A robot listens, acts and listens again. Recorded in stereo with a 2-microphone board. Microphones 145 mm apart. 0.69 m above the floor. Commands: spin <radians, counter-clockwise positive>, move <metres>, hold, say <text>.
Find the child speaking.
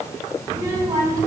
spin -0.44
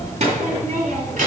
spin -2.27
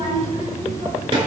spin -0.70
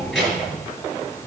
say Found it: a child speaking, straight ahead.